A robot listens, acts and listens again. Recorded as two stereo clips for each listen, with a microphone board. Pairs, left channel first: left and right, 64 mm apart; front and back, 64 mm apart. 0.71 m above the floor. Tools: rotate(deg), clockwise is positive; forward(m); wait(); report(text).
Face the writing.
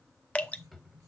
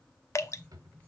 rotate(65)
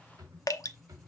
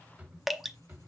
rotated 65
report("Facing the writing, 2 to 4 m away.")